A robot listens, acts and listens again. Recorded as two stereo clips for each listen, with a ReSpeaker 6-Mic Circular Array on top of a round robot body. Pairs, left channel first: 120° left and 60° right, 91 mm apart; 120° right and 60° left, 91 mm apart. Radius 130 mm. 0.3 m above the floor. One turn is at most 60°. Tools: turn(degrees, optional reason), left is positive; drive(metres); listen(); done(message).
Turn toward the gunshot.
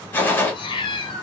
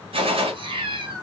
turn(degrees=50, reason="The gunshot: 50° left.")
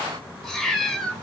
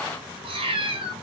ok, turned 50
done("Facing where the gunshot came from. I can't hear it now.")